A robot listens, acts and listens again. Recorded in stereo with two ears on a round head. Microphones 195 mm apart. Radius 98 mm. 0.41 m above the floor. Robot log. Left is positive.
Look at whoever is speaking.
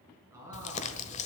cmd yaw -30
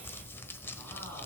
cmd idle
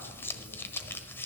cmd idle
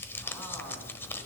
end: I heard a man speaking, but can't make it out now. It was about 15° left or 135° right.